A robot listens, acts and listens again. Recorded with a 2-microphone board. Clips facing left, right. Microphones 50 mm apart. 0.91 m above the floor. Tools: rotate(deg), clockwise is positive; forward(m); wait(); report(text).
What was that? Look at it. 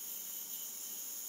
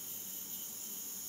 wait()
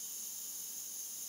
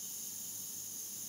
wait()
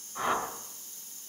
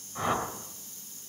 rotate(30)
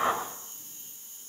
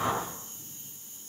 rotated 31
rotate(-30)
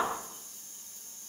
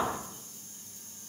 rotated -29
report("Facing the whoosh, 2 to 4 m away.")